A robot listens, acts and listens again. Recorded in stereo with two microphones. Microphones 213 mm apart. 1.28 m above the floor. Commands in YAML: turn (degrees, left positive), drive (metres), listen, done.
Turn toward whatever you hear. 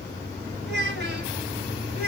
turn: -45
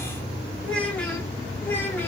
turn: 10
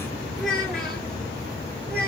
done: "Found it: a child speaking, straight ahead."